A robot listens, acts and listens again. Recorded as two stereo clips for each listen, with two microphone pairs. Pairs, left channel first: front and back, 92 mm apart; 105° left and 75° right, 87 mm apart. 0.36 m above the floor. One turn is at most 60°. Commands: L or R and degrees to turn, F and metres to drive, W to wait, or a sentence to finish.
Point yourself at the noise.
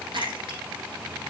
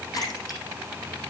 L60
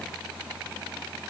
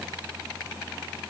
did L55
L60
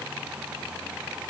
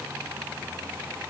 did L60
L35
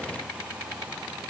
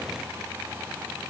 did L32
Facing where the splash came from. I can't hear it now.